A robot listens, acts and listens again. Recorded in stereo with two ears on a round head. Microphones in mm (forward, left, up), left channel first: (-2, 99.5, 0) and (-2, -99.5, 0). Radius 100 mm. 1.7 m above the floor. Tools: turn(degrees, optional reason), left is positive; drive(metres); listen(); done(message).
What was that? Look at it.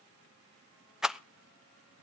turn(degrees=-30)
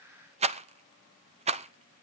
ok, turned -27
turn(degrees=-150, reason="So it is at 150° right.")
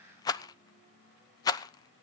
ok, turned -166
turn(degrees=20, reason="The rattle is now 20° left.")
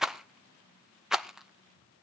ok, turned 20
done("Found it: a rattle, straight ahead, under 1 m away.")